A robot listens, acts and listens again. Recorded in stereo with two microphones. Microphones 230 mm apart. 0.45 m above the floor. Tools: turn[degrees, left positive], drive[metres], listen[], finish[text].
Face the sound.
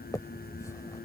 Action: turn[30]
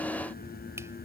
Action: listen[]
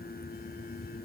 Action: listen[]
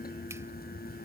Action: finish[I heard a finger snap, but can't make it out now. It was about 15° right or 135° left.]